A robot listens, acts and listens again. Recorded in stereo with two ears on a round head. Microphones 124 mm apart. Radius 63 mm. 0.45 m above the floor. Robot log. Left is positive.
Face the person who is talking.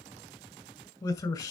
note: The man speaking: about 30° left or 150° left.
cmd yaw +30
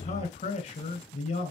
note: So it is at 120° left.
cmd yaw +120
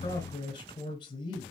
note: The man speaking is now 40° left.
cmd yaw +40
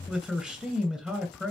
end: Facing the man speaking, 2 to 4 m away.